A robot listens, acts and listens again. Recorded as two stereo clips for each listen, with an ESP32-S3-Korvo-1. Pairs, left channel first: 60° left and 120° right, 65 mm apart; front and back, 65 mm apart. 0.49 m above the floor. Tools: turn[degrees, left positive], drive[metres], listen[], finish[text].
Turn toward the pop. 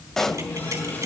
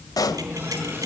Thought: The pop: 25° right.
Action: turn[-25]
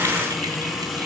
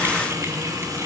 Action: finish[Facing where the pop came from. I can't hear it now.]